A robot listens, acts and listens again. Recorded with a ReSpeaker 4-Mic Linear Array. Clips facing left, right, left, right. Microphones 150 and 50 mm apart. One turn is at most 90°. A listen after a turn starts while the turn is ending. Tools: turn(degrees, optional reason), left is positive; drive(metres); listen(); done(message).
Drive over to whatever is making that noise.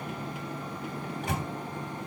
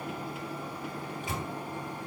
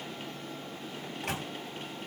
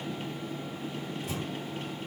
turn(degrees=75, reason="The microwave: about 75° left or 105° left.")
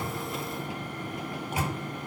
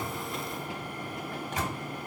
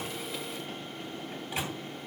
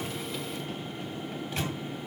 turn(degrees=10, reason="So it is at 10° left.")
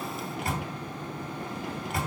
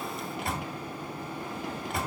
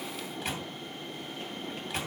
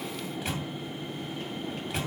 drive(metres=1.0)
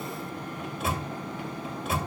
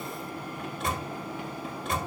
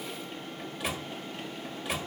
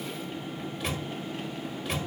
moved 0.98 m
drive(metres=1.0)
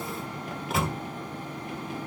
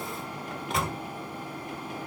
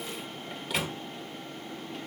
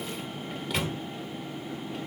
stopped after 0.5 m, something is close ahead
done("Arrived at the microwave, straight ahead.")